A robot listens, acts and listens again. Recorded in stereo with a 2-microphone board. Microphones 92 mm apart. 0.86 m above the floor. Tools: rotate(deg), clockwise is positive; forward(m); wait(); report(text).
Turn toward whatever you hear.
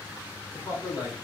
rotate(-40)
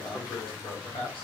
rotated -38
rotate(-105)
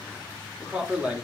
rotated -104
rotate(10)
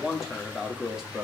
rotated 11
rotate(10)
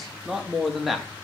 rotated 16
report("Found it: a man speaking, straight ahead.")